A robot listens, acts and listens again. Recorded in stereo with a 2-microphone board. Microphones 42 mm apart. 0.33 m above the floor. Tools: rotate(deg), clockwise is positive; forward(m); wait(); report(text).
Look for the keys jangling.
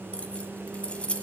rotate(-30)
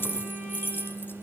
rotate(-115)
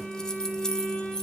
rotate(-10)
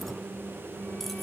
wait()
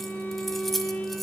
report("Facing the keys jangling.")